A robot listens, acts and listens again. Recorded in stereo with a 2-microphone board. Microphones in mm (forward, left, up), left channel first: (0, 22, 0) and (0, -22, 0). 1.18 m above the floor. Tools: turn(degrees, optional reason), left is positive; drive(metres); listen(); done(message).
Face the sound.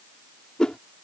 turn(degrees=20, reason="The whoosh: about 20° left or 160° left.")
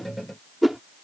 done("Found it: a whoosh, straight ahead.")